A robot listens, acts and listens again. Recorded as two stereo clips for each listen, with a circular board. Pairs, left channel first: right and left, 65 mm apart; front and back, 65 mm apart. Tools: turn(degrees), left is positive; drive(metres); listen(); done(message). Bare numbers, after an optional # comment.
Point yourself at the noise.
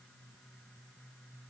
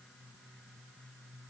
listen()
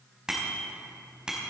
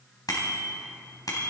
# The bicycle bell: 15° left.
turn(15)
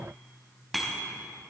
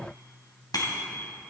done("Facing the bicycle bell, 2 to 4 m away.")